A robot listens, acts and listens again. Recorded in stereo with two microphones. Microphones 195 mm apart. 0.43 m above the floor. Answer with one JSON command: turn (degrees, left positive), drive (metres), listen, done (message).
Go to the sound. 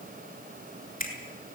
{"turn": 45}
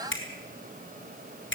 {"turn": 90}
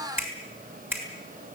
{"turn": -10}
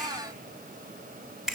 {"drive": 1.0}
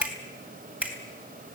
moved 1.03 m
{"drive": 1.0}
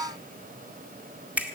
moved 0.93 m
{"turn": -10}
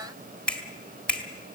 {"drive": 1.0}
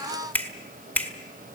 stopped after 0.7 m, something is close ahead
{"turn": 10}
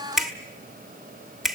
{"done": "Arrived at the finger snap, straight ahead."}